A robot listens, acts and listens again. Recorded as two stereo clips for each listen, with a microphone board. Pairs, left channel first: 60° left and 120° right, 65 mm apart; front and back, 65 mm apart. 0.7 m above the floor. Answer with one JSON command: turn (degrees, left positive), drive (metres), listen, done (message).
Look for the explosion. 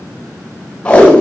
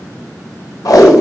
{"listen": true}
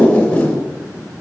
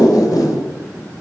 {"listen": true}
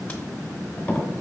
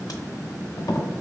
{"done": "I can't make out an explosion to turn to."}